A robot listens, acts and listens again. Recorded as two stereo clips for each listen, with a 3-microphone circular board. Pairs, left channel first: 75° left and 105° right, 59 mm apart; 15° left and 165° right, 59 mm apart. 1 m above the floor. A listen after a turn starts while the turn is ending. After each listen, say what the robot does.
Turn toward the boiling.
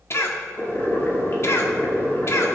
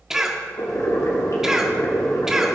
Turn 25° left.
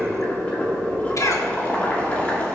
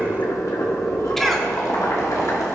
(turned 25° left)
Turn 15° left.
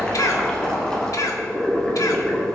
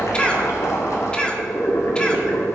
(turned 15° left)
Found it: boiling, straight ahead, 2 to 4 m away.